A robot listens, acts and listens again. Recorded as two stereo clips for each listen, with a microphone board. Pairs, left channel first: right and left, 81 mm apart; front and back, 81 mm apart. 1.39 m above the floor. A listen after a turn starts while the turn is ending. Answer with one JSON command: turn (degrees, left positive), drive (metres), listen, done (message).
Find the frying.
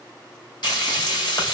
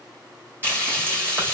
{"turn": -115}
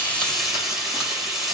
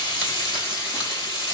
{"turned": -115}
{"done": "Found it: frying, straight ahead, 1 to 2 m away."}